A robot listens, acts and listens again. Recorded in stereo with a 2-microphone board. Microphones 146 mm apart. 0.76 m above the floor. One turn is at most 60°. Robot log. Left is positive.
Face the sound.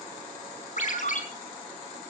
note: The ringtone: about 60° left or 120° left.
cmd yaw +60
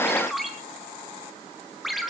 end: Facing the ringtone, 2 to 4 m away.